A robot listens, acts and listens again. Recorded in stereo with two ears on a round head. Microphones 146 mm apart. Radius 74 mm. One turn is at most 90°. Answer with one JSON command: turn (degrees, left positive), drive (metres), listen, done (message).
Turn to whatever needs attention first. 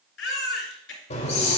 {"turn": 90}
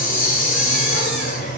{"listen": true}
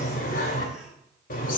{"listen": true}
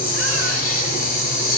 {"done": "I heard a baby crying from this way, but can't make it out now."}